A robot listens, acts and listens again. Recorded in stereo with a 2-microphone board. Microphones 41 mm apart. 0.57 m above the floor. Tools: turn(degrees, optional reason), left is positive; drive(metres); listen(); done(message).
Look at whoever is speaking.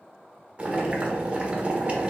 listen()
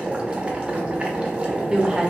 turn(degrees=-15, reason="The woman speaking: about 15° right or 165° right.")
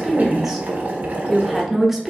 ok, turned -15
done("Facing the woman speaking.")